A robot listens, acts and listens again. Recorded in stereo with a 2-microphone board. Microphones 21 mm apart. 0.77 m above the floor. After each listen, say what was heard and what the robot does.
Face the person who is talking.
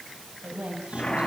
Turn 90° right.
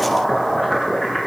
Keep listening.
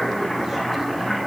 Keep listening.
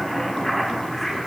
I heard a woman speaking from this way, but can't make it out now.